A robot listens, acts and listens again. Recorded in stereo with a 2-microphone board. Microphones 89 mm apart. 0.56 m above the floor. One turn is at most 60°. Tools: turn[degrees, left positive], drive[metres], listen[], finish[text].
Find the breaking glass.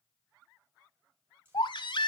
Action: listen[]
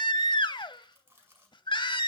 Action: listen[]
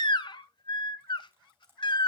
Action: finish[I can't make out breaking glass, only a baby crying and chewing.]